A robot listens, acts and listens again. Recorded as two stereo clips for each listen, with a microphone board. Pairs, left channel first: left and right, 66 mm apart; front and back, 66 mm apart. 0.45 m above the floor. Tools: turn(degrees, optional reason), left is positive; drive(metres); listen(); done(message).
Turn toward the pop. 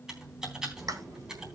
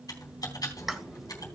turn(degrees=-95, reason="The pop: 95° right.")
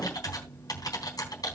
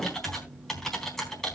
done("Facing where the pop came from. I can't hear it now.")